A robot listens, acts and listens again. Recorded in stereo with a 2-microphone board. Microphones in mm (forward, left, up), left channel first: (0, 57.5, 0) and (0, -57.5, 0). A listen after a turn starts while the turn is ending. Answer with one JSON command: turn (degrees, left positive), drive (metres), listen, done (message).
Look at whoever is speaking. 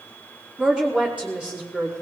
{"turn": -30}
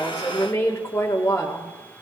{"turn": 20}
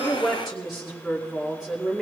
{"done": "Found it: a woman speaking, straight ahead, 1 to 2 m away."}